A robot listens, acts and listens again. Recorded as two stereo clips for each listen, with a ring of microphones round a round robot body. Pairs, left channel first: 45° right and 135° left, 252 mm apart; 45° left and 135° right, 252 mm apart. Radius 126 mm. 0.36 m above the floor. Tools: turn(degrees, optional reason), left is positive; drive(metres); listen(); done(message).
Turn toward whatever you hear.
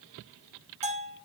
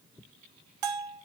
turn(degrees=-160, reason="The bell: 160° right.")
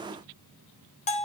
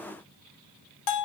turn(degrees=20, reason="The bell is now 20° left.")
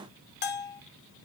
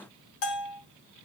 done("Facing the bell, 1 to 2 m away.")